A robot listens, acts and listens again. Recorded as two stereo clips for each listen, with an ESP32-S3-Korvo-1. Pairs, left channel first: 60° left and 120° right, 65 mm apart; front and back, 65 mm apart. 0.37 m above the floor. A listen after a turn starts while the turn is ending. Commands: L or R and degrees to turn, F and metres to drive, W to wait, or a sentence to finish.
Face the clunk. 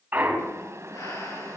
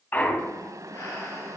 R60
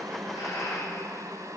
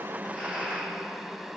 Facing where the clunk came from. I can't hear it now.